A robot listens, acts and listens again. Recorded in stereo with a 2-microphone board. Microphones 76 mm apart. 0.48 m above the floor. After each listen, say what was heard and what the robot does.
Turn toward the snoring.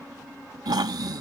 The snoring: about 75° right or 105° right. Turn 75° right.
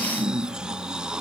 So it is at 10° right. Turn 10° right.
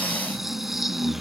Found it: snoring, straight ahead.